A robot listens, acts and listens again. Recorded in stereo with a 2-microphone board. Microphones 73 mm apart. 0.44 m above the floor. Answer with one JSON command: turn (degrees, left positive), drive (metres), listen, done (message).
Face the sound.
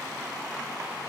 {"listen": true}
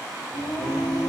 {"turn": 90}
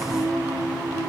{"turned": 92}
{"turn": -25}
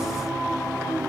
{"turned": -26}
{"done": "Facing the singing, 2 to 4 m away."}